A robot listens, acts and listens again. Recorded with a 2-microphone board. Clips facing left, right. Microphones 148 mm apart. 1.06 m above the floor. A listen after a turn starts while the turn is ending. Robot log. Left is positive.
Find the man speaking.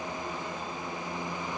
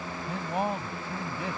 cmd yaw -90
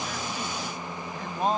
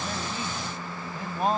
end: Found it: a man speaking, straight ahead.